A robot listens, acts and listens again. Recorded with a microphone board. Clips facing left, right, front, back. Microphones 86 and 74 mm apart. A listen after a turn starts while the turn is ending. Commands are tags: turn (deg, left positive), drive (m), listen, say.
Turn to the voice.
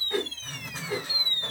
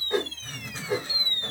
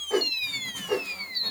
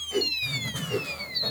<listen/>
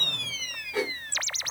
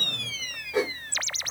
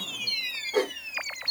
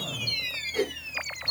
<listen/>
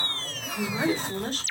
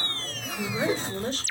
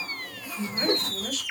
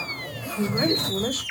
<turn deg="130"/>
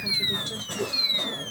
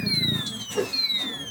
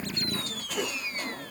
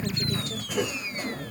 <listen/>
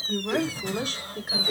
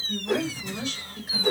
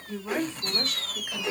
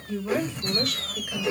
<turn deg="55"/>
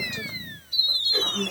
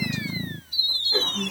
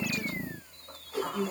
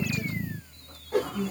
<say>Facing the woman speaking, 2 to 4 m away.</say>